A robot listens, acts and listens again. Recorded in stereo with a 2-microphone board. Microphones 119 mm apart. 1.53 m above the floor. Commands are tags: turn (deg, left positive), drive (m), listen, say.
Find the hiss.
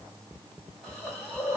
<turn deg="30"/>
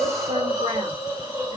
<turn deg="-30"/>
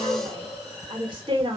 <say>Found it: a hiss, straight ahead, 2 to 4 m away.</say>